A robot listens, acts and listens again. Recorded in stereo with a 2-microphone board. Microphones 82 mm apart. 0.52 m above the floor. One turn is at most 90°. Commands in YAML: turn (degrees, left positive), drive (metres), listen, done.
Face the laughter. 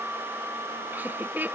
turn: -25
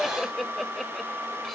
done: "Found it: laughter, straight ahead."